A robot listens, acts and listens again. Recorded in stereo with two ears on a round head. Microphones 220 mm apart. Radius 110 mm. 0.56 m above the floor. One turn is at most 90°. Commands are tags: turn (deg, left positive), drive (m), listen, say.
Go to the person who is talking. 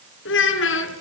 <turn deg="55"/>
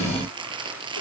<listen/>
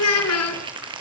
<turn deg="70"/>
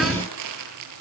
<listen/>
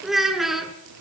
<drive m="1.0"/>
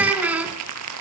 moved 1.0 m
<drive m="1.0"/>
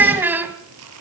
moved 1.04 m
<turn deg="-10"/>
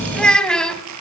<drive m="1.0"/>
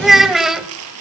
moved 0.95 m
<drive m="1.0"/>
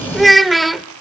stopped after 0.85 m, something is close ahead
<say>Arrived at the child speaking, straight ahead.</say>